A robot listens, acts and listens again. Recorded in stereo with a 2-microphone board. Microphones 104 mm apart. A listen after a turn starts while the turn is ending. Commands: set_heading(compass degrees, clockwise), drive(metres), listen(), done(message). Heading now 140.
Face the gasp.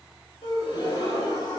set_heading(90)
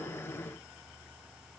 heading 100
listen()
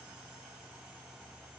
done("I heard a gasp, but can't make it out now. It was about 10° left or 90° left.")